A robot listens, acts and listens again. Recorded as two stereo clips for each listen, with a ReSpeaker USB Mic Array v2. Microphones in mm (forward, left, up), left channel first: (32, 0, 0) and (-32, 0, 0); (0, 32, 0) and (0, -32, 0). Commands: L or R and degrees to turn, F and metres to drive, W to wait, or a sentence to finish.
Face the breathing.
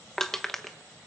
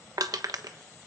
W
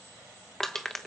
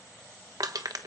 W
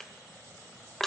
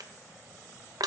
I can't make out breathing, only crushing.